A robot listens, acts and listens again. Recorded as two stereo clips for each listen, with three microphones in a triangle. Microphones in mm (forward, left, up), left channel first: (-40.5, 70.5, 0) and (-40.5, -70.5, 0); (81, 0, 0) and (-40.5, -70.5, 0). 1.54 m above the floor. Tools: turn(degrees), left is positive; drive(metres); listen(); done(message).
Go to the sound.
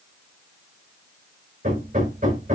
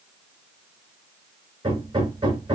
turn(degrees=-100)
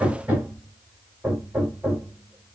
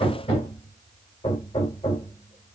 turn(degrees=-10)
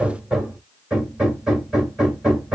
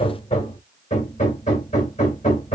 drive(metres=1.0)
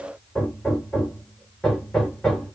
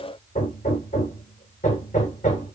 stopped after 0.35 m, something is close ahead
done("Something is in my way. I am facing the hammering but have not reached it.")